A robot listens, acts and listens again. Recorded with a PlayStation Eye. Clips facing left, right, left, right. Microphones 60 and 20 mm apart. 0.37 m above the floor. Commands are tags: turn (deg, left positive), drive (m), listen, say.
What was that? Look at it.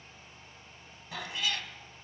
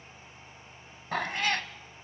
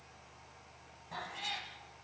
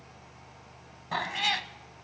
<turn deg="-50"/>
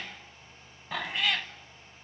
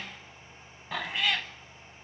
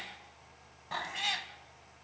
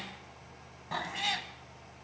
<say>Found it: a cat meowing, straight ahead, under 1 m away.</say>